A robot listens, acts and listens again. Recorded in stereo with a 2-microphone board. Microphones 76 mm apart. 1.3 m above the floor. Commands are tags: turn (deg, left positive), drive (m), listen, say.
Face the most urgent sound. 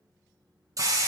<listen/>
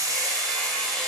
<listen/>
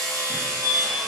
<turn deg="50"/>
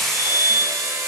<say>Found it: a fire alarm, straight ahead, 2 to 4 m away.</say>